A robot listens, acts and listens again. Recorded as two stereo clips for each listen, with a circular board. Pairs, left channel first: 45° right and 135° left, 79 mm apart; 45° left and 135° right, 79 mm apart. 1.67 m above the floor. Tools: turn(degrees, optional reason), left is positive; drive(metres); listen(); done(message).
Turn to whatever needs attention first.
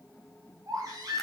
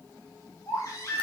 turn(degrees=95, reason="The baby crying: 95° left.")
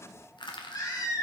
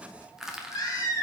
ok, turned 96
done("Facing the baby crying.")